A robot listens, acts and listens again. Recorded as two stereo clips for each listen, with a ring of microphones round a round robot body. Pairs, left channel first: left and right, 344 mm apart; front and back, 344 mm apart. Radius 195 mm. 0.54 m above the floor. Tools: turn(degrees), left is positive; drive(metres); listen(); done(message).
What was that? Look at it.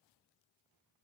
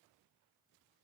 listen()
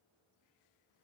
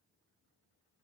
listen()
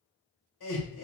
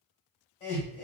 turn(degrees=80)
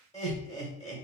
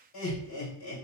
turn(degrees=20)
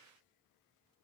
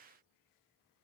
listen()
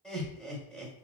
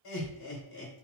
done("Found it: laughter, straight ahead, 1 to 2 m away.")